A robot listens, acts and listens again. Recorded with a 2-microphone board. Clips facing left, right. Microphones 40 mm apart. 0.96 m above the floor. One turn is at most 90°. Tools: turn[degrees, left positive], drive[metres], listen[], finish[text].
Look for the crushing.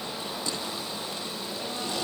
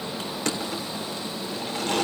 Action: turn[-90]
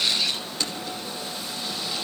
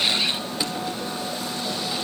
Thought: So it is at 10° right.
Action: turn[-10]
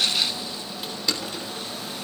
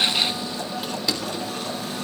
Action: finish[Found it: crushing, straight ahead, 2 to 4 m away.]